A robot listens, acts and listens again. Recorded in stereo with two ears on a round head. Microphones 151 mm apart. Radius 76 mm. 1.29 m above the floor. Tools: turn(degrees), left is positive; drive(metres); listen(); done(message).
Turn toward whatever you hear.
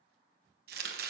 turn(degrees=-65)
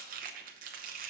turn(degrees=-55)
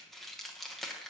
done("Facing the chopping, under 1 m away.")